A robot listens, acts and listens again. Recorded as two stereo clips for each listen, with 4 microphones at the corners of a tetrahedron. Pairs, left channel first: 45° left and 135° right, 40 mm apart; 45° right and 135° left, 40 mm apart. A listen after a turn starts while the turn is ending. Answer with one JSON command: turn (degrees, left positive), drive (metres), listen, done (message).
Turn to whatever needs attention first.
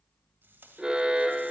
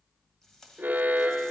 {"turn": 160}
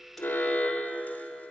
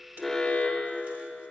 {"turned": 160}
{"turn": 10}
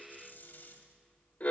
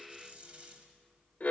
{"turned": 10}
{"done": "Facing the alarm."}